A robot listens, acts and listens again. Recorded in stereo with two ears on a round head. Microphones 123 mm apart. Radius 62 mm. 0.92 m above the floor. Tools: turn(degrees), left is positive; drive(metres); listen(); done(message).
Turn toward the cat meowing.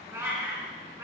turn(degrees=-20)
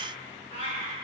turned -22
turn(degrees=-135)
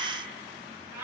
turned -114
turn(degrees=-20)
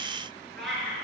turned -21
done("Facing the cat meowing, over 4 m away.")